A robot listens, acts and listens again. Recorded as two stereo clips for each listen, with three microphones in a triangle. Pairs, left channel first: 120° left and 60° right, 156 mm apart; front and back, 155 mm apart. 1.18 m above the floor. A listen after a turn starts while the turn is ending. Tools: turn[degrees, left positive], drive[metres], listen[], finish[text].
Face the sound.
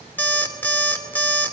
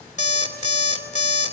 Thought: The alarm clock: 40° left.
Action: turn[40]
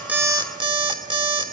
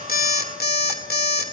Action: finish[Facing the alarm clock, 2 to 4 m away.]